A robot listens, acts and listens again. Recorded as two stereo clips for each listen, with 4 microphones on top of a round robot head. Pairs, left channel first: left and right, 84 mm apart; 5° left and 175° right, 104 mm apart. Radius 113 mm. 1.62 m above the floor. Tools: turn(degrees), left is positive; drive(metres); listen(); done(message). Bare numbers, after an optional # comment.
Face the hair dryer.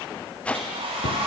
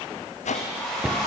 # The hair dryer: 80° right.
turn(-80)
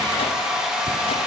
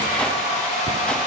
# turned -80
# The hair dryer is now 10° right.
turn(-10)
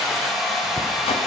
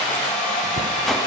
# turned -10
done("Facing the hair dryer.")